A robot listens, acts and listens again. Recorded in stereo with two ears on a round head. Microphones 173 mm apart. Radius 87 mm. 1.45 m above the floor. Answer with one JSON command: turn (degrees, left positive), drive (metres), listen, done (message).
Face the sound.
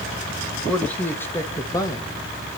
{"turn": 20}
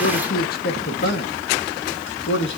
{"turn": 110}
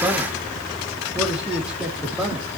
{"done": "Found it: a man speaking, straight ahead, 2 to 4 m away."}